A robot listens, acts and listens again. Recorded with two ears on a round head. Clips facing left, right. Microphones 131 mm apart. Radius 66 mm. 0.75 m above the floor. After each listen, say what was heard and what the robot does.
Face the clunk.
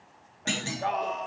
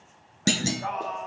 The clunk: about 45° right or 135° right. Turn 45° right.
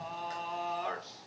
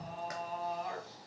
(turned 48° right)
Keep listening.
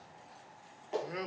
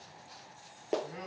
I heard a clunk, but can't make it out now. It was about straight ahead or 85° right.